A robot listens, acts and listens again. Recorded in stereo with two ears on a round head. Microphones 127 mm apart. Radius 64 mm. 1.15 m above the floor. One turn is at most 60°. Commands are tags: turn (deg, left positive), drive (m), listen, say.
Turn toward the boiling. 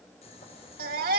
<turn deg="50"/>
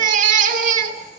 <listen/>
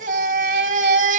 <listen/>
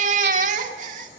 <say>I heard boiling, but can't make it out now. It was about straight ahead or 80° left.</say>